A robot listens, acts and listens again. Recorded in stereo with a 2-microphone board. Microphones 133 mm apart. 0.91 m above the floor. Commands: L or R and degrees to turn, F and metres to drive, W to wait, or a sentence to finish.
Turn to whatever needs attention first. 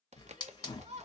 R55
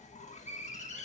W
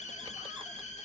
W
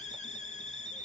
I heard a shout, but can't make it out now. It was about straight ahead or 70° right.